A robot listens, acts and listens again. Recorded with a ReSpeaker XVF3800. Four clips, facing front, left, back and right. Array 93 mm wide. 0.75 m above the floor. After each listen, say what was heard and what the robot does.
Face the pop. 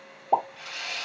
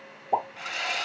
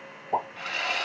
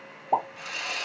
The pop: 25° right. Turn 25° right.
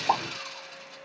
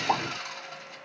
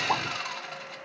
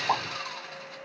Facing the pop, 1 to 2 m away.